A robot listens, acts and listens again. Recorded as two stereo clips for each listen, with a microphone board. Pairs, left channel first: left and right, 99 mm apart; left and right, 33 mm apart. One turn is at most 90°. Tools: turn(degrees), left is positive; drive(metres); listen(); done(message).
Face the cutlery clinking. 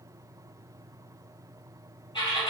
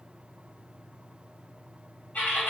listen()
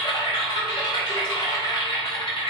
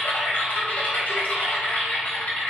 listen()
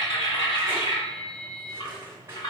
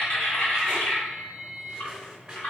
turn(degrees=-25)
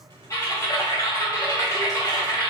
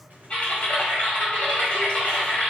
listen()
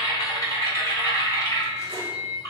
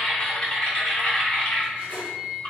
listen()
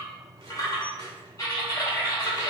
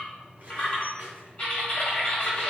done("I heard cutlery clinking, but can't make it out now. It was about straight ahead or 130° right.")